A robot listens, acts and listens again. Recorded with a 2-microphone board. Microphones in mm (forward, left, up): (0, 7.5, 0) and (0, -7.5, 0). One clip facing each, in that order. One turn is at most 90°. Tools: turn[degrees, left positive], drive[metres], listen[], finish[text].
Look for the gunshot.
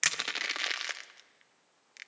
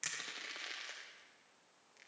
Action: listen[]
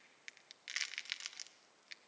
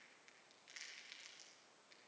Action: listen[]
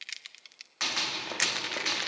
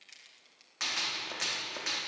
Action: turn[30]
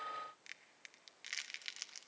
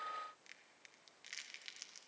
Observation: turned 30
Action: listen[]
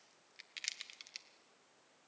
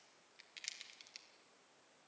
Action: finish[I heard a gunshot, but can't make it out now. It was about 15° right or 135° left.]